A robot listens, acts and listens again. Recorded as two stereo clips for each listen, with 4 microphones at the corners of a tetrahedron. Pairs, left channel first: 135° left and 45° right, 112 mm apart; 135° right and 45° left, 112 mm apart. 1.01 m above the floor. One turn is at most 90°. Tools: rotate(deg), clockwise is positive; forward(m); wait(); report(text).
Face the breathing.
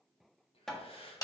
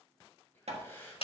rotate(-90)
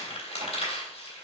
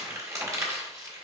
rotate(-65)
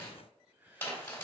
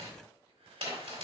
rotate(-30)
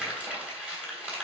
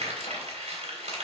wait()
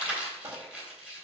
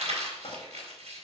wait()
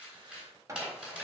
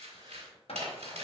report("I heard breathing from this way, but can't make it out now.")